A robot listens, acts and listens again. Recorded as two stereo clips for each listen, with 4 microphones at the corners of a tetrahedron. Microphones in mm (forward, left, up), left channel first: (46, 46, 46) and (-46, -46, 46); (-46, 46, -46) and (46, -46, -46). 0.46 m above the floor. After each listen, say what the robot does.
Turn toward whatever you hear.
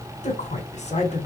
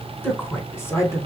Turn 70° left.
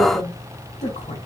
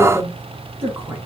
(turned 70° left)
Turn 25° left.
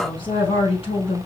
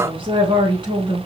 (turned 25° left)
Facing the woman speaking, 2 to 4 m away.